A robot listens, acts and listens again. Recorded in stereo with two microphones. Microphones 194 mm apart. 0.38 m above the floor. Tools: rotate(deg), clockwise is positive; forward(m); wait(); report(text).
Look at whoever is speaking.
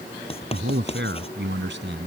rotate(75)
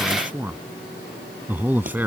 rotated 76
rotate(10)
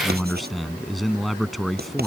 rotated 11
report("Facing the man speaking.")